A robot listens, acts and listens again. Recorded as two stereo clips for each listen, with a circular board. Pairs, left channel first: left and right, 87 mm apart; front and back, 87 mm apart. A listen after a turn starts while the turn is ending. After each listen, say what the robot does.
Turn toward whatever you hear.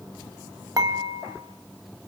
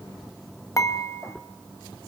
Turn 50° right.
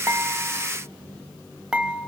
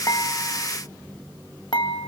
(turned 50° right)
Turn 15° right.
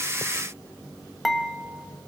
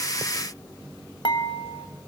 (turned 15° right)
Facing the dishes clattering.